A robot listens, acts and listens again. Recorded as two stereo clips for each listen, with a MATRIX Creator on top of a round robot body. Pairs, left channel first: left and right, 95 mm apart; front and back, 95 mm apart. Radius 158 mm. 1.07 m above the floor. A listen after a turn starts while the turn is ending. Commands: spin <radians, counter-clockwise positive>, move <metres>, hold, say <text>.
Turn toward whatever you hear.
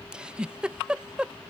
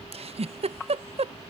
spin -2.97
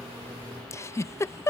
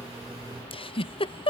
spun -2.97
spin 0.52
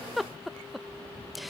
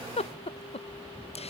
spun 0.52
say Found it: a giggle, straight ahead.